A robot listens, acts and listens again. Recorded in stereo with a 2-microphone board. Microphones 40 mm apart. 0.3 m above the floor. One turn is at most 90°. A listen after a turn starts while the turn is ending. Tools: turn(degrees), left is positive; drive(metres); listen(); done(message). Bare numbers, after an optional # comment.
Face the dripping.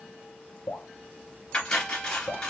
# The dripping: about 65° left or 115° left.
turn(65)
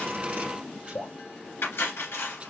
# So it is at 50° left.
turn(50)
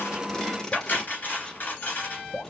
done("Facing the dripping.")